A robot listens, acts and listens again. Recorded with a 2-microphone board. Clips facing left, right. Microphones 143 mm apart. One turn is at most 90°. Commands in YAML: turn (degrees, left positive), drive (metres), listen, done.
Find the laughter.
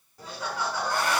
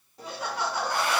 turn: -20
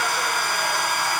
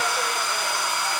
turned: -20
listen: true
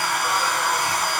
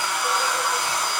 listen: true
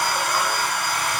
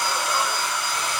done: "I heard laughter, but can't make it out now. It was about straight ahead or 140° right."